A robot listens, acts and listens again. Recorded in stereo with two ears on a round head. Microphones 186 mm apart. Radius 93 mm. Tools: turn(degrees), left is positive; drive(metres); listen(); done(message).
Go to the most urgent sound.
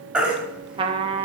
turn(degrees=-30)
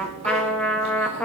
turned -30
listen()
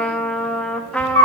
turn(degrees=-145)
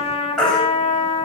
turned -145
drive(metres=1.0)
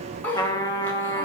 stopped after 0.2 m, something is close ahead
listen()
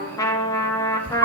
turn(degrees=10)
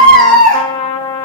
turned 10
done("Something is in my way. I am facing the baby crying but have not reached it.")